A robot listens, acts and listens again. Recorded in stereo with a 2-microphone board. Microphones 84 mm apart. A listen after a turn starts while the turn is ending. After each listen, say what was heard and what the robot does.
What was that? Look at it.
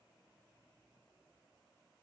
Keep listening.
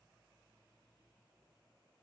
Keep listening.
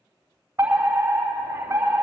The fire alarm: about 30° right or 150° right. Turn 30° right.
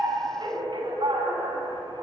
So it is at 110° right. Turn 110° right.
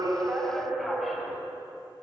Facing the fire alarm.